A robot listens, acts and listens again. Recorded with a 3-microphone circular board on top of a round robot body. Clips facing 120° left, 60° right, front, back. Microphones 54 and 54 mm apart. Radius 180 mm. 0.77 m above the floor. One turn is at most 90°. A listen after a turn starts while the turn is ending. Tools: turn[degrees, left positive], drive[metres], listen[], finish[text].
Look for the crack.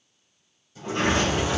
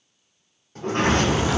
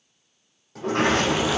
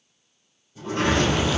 Thought: The crack: 85° right.
Action: turn[-85]
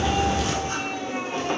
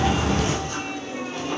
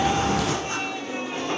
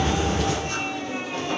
Action: finish[Facing the crack, 2 to 4 m away.]